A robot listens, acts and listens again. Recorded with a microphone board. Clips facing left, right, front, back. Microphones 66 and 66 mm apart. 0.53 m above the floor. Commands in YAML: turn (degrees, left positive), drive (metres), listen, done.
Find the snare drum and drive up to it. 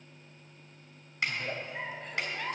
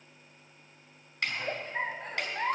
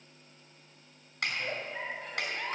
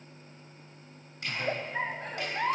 drive: 1.0
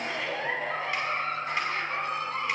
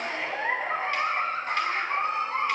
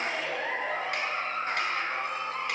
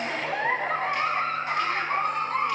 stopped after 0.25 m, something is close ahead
listen: true
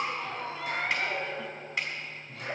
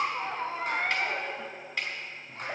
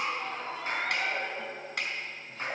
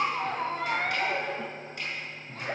done: "Something is in my way. I am facing the snare drum but have not reached it."